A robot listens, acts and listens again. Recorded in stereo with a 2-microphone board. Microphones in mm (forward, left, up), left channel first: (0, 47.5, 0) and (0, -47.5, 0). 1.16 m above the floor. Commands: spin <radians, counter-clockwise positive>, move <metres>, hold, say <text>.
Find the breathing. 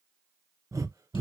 spin -0.61
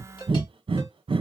spin -1.92
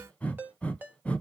spin 0.26
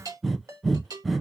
say Facing the breathing.